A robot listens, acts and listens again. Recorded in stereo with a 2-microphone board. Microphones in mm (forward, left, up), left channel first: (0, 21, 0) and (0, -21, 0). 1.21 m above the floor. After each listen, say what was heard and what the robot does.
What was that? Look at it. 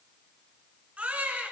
The baby crying: about 30° right or 150° right. Turn 30° right.
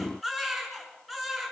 Found it: a baby crying, straight ahead.